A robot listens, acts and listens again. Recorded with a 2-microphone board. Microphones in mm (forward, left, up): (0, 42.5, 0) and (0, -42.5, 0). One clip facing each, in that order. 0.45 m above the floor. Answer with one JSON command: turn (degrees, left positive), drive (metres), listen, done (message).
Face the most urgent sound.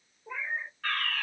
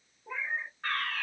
{"turn": -20}
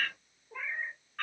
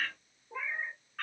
{"done": "Facing the fire alarm."}